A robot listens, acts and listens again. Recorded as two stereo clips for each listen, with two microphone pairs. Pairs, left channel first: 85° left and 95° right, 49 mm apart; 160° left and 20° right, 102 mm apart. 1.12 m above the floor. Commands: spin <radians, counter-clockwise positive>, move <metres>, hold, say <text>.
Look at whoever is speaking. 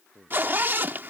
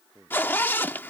spin -1.66
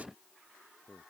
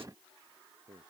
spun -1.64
say Facing the man speaking.